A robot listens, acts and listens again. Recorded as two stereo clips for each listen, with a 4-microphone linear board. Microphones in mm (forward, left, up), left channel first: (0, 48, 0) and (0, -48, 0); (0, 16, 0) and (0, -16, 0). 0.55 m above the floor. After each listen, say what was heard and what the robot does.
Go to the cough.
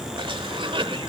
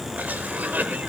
The cough: about 65° right or 115° right. Turn 65° right.
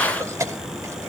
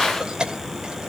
So it is at 35° right. Turn 35° right.
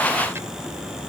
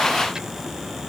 Keep listening.
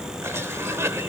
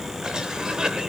The cough is now 30° right. Turn 30° right.
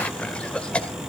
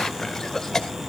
The cough is now 15° left. Turn 15° left.
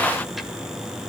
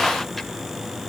Keep listening.
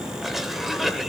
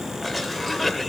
Drive 1.0 m forward.
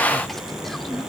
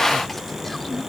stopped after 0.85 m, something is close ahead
Keep listening.
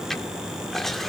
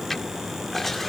Arrived at the cough, straight ahead.